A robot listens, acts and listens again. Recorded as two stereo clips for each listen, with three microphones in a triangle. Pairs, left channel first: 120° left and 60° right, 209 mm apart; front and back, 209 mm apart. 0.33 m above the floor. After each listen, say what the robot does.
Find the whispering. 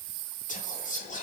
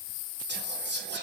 Turn 165° left.
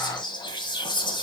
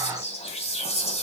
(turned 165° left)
Turn 55° left.
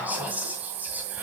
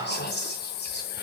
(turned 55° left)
Turn 20° left.
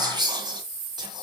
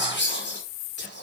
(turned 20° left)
Turn 10° left.
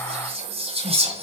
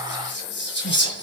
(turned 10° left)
Facing the whispering.